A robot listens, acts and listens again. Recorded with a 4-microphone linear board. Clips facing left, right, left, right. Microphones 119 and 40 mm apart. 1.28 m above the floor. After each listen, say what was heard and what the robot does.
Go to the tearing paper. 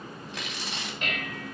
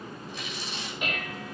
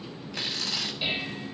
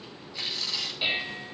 Turn 90° left.
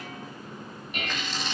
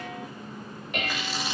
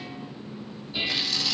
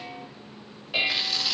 So it is at 10° right. Turn 10° right.
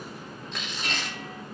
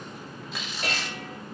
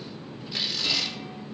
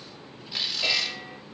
Drive 1.0 m forward.
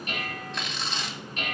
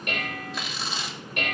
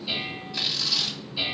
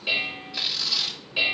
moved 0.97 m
Drive 1.0 m forward.
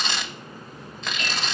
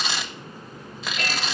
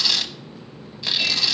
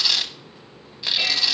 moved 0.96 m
Drive 1.0 m forward.
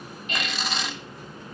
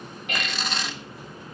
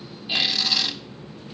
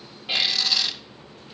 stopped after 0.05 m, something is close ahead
Arrived at the tearing paper, straight ahead.